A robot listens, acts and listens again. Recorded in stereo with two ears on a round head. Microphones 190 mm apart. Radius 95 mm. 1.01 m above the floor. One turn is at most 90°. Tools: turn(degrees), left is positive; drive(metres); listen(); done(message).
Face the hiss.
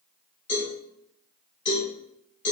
listen()
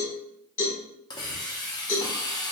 turn(degrees=20)
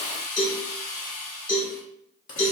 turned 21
turn(degrees=90)
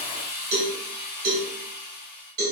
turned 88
turn(degrees=50)
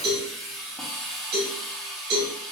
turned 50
done("Facing the hiss.")